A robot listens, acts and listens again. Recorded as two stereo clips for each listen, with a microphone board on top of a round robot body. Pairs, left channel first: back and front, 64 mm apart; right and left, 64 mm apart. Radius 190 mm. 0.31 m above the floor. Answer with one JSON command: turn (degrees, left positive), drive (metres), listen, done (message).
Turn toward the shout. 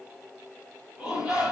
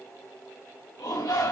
{"turn": -85}
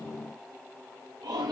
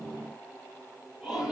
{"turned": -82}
{"done": "Found it: a shout, straight ahead, over 4 m away."}